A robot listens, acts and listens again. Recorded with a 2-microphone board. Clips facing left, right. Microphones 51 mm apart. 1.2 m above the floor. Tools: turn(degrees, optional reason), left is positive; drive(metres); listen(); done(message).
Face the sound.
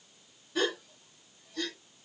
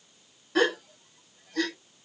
turn(degrees=-70, reason="The gasp: about 70° right or 110° right.")
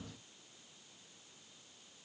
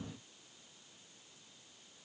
listen()
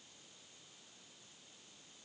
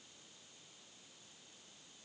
done("I heard a gasp, but can't make it out now. It was about straight ahead or 40° right.")